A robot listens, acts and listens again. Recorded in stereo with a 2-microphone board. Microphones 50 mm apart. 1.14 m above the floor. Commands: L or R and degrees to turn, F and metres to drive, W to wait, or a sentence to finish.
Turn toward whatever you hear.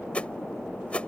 L25
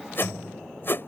L130
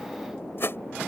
L50
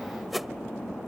Found it: a whoosh, straight ahead.